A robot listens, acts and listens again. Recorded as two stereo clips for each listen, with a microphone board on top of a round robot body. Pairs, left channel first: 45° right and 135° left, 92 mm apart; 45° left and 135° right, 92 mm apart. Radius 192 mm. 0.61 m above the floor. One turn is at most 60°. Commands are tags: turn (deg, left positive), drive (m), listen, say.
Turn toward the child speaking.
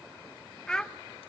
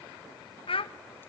<turn deg="35"/>
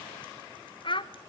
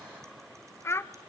<turn deg="-15"/>
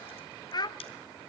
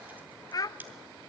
<say>Found it: a child speaking, straight ahead, under 1 m away.</say>